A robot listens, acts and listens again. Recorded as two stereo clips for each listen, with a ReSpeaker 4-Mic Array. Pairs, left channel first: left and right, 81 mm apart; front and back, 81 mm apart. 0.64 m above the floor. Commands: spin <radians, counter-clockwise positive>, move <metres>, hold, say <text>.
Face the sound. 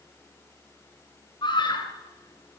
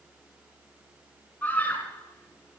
spin 1.22
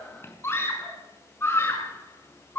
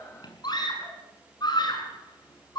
spin 0.52
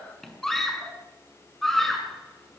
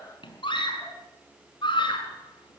say Found it: a scream, straight ahead.